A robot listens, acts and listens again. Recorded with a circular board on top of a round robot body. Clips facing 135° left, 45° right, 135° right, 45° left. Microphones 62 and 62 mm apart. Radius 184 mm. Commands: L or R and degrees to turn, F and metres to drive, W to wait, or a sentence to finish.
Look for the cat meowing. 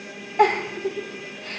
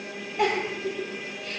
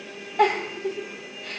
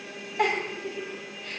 W
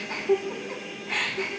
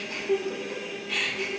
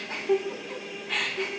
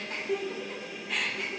W
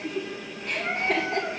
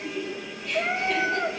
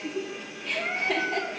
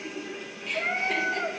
R20
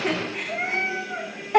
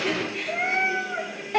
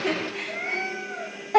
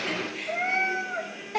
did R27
L15
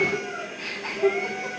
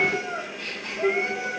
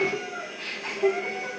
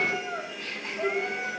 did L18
Facing the cat meowing, 2 to 4 m away.